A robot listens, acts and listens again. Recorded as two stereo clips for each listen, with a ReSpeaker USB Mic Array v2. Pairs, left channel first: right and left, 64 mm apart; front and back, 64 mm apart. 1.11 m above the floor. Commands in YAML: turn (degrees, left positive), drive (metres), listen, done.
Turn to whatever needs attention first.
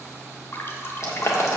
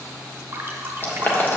listen: true
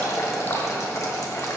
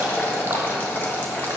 listen: true
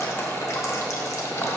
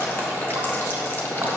done: "I can't make out anything urgent to turn to."